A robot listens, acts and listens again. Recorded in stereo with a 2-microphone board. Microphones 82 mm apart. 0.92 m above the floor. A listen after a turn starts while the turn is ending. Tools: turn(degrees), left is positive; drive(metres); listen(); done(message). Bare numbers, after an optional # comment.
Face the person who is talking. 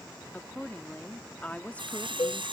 # The woman speaking: about 20° left or 160° left.
turn(20)
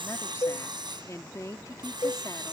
# So it is at 140° left.
turn(140)
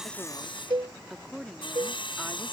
done("Found it: a woman speaking, straight ahead.")